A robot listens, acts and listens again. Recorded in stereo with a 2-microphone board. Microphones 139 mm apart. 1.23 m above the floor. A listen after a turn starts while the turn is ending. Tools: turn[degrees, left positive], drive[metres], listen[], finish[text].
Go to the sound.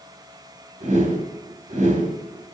Thought: The whoosh: about 65° right or 115° right.
Action: turn[-65]
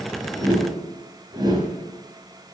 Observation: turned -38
Thought: So it is at 30° right.
Action: turn[-30]
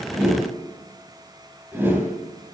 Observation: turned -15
Thought: The whoosh is now 15° right.
Action: turn[-15]
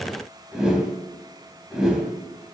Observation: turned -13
Action: drive[1.0]
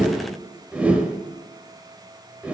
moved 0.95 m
Thought: The whoosh is now 10° right.
Action: turn[-10]
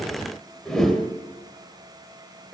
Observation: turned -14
Action: drive[1.0]
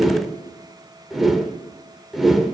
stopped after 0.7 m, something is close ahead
Action: finish[Arrived at the whoosh, straight ahead.]